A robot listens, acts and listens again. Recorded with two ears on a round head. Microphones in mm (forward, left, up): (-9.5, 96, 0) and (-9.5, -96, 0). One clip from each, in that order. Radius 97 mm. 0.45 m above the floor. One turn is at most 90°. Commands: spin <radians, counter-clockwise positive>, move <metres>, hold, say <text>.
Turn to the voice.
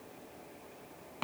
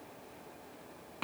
hold
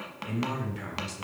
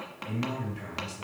spin 0.44
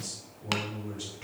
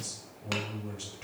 say Facing the man speaking, 2 to 4 m away.